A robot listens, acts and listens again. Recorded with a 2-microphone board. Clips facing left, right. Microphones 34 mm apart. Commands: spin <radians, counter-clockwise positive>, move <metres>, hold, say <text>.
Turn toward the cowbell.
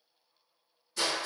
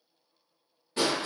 hold
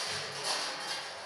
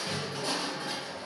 hold
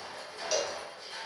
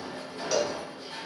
spin 0.52
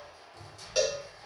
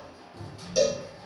spin 2.44
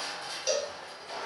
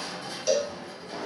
spin 0.26
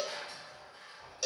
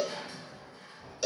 say Found it: a cowbell, straight ahead.